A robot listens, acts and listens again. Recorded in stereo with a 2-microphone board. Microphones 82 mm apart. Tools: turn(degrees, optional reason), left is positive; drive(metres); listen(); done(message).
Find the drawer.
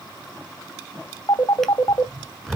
turn(degrees=30)
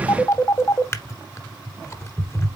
turn(degrees=145, reason="So it is at 145° left.")
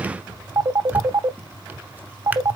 turn(degrees=-20, reason="The drawer is now 20° right.")
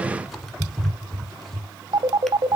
done("Found it: a drawer, straight ahead.")